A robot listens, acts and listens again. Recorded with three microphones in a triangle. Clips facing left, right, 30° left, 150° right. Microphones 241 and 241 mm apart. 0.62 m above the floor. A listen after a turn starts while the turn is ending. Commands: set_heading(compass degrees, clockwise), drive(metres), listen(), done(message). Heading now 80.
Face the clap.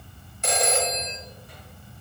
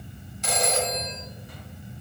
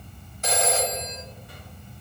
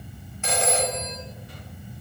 listen()
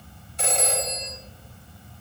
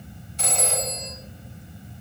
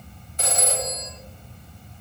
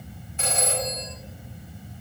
listen()
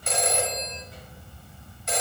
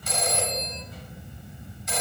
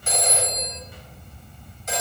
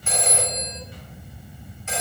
done("I can't make out a clap, only a phone ringing.")